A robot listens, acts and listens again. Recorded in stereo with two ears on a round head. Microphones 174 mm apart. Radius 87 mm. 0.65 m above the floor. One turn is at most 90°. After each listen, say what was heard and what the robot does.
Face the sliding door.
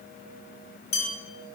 Keep listening.
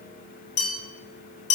Keep listening.
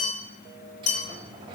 The sliding door: about 25° right or 155° right. Turn 25° right.
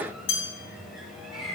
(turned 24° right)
Facing the sliding door, 1 to 2 m away.